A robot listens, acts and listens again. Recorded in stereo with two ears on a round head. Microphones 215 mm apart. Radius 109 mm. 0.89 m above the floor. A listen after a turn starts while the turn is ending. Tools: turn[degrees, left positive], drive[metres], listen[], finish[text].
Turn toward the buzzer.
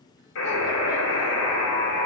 Thought: The buzzer: about 60° left or 120° left.
Action: turn[60]
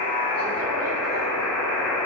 Action: finish[Found it: a buzzer, straight ahead, 2 to 4 m away.]